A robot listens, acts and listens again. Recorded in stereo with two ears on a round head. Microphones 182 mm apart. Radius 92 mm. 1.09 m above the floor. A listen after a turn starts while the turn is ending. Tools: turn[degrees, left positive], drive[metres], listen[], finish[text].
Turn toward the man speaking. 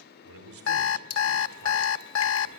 Action: turn[-90]
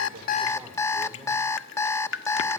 Action: listen[]
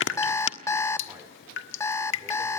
Action: listen[]
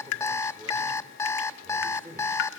Thought: The man speaking is now 10° right.
Action: turn[-10]
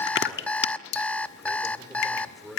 Action: finish[Facing the man speaking.]